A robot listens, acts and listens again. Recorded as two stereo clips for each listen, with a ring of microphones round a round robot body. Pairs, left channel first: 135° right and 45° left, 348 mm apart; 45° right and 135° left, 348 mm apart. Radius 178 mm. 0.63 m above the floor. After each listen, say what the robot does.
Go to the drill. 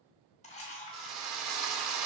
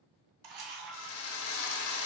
Drive 1.0 m forward.
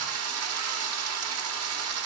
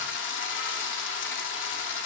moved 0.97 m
Drive 1.0 m forward.
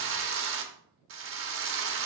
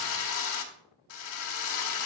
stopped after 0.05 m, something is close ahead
I am next to the drill.